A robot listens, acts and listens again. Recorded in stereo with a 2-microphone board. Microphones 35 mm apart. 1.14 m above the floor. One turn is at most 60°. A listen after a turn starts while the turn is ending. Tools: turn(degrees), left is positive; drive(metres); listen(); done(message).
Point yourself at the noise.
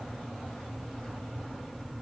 listen()
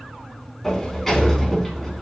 turn(degrees=30)
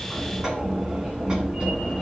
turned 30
turn(degrees=-25)
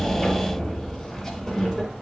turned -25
done("Found it: a sliding door, straight ahead.")